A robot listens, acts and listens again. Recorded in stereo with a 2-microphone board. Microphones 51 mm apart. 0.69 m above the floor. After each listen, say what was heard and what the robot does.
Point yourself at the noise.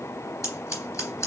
The scissors: about 65° left or 115° left. Turn 65° left.
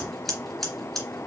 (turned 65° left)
Found it: scissors, straight ahead.